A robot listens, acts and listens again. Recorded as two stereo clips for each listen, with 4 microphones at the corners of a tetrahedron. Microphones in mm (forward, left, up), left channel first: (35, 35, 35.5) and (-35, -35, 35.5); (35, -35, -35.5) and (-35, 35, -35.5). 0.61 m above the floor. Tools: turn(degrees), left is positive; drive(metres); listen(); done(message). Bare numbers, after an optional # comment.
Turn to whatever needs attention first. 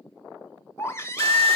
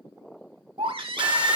# The baby crying: 105° left.
turn(105)
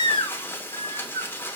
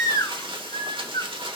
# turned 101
done("Facing the baby crying, 1 to 2 m away.")